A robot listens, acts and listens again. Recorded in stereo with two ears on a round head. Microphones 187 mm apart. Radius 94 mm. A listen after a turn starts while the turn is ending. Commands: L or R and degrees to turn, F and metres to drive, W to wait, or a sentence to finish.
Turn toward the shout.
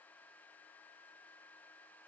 W
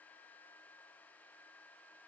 W
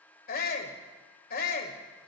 L45
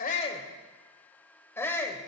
L15
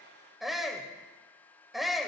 Found it: a shout, straight ahead.